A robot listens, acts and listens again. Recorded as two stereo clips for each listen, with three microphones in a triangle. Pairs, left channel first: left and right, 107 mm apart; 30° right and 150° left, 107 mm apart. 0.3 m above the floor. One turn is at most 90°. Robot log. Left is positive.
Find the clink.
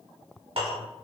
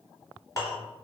note: The clink: 85° right.
cmd yaw -85
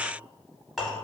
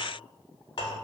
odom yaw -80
end: Found it: a clink, straight ahead, 1 to 2 m away.